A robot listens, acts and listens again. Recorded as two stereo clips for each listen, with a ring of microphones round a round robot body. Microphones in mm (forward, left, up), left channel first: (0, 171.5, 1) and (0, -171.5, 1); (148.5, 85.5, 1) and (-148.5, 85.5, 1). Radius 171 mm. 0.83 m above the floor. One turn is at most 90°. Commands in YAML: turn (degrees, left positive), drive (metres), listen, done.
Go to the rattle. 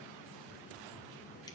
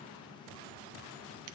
listen: true
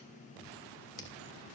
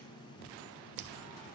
listen: true
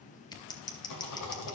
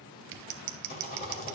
turn: 60
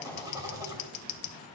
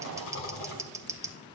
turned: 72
turn: -10
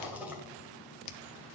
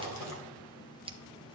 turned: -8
drive: 1.0
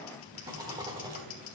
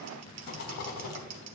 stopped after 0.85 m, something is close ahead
turn: -15
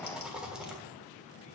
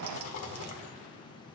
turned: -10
done: "I am next to the rattle."